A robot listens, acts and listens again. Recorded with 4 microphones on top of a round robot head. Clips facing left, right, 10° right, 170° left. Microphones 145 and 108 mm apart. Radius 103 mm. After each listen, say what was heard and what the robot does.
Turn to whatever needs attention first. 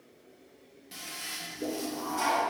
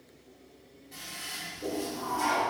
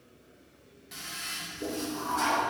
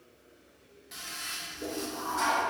Keep listening.
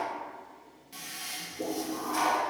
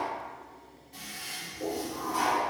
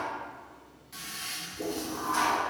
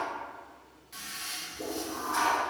Keep listening.
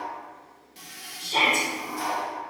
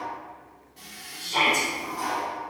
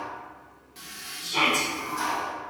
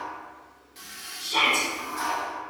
The shout: 150° left. Turn 150° left.
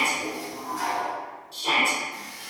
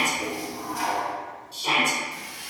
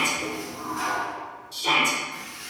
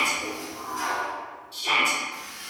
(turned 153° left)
Facing the shout.